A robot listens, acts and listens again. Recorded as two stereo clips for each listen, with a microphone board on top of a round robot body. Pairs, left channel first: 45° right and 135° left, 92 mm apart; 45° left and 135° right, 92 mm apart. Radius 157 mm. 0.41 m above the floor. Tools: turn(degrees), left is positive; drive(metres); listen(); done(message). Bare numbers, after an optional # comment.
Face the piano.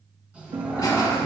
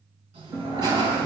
# The piano: 155° left.
turn(155)
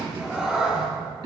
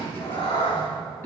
listen()
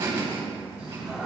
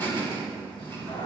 listen()
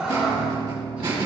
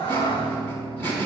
done("Facing the piano.")